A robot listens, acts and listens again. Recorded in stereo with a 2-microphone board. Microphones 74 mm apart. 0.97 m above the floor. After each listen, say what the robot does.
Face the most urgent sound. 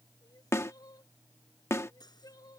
Turn 60° left.
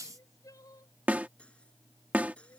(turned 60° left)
Turn 55° left.
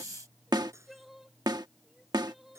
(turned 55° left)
Facing the crying.